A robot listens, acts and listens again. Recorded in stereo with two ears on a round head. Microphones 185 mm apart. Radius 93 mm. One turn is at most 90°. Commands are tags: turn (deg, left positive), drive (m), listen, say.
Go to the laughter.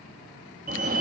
<listen/>
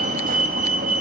<listen/>
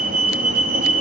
<say>I can't make out laughter to turn to.</say>